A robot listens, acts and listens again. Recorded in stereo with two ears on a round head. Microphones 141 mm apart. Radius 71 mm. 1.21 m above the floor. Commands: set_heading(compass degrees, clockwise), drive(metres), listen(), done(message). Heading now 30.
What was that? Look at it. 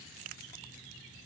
listen()
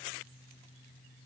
listen()
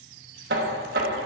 set_heading(100)
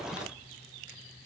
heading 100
set_heading(140)
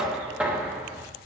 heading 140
done("Found it: knocking, straight ahead, 1 to 2 m away.")